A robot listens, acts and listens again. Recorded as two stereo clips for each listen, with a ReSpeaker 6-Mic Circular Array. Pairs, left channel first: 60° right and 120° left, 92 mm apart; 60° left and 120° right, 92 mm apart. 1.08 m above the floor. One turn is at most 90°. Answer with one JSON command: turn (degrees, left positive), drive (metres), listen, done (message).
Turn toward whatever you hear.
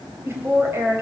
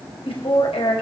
{"turn": 55}
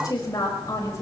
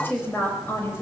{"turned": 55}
{"done": "Facing the woman speaking."}